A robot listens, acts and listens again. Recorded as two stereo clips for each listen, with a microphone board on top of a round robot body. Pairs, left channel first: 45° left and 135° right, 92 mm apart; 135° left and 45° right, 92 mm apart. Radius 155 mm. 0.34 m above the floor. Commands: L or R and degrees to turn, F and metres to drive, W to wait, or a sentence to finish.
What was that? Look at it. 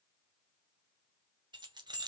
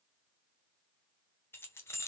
R165
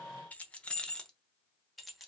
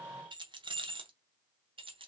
R45
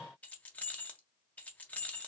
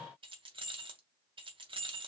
R30
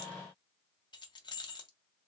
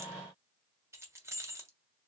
L15
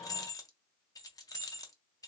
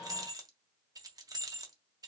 Found it: keys jangling, straight ahead, 1 to 2 m away.